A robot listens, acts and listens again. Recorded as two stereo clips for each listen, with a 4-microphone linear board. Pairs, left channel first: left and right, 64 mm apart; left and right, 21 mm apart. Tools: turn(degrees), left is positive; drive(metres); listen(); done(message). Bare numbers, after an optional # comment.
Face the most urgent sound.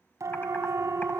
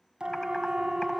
# The siren: about 55° right or 125° right.
turn(-55)
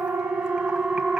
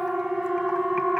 # So it is at 10° right.
turn(-10)
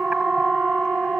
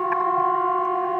done("Facing the siren.")